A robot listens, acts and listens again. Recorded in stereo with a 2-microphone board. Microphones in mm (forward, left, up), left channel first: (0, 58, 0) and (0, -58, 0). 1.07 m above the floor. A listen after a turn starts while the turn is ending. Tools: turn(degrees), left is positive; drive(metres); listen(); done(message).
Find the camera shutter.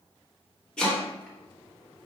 listen()
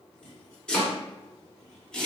listen()
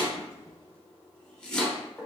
done("I can't make out a camera shutter, only chopping.")